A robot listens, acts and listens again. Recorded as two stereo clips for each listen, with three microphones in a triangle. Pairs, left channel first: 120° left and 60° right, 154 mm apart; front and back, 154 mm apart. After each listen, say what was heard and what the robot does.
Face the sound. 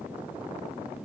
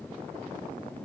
Keep listening.
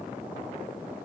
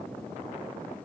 Keep listening.
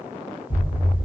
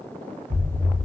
The explosion: 150° left. Turn 150° left.
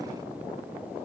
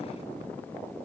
Facing where the explosion came from. I can't hear it now.